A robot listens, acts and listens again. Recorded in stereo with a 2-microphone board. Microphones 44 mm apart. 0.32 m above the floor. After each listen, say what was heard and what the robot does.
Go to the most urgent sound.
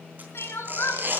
Turn 90° left.
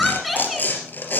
Drive 1.0 m forward.
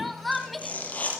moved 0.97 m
Drive 1.0 m forward.
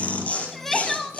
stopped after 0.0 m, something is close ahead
I am next to the crying.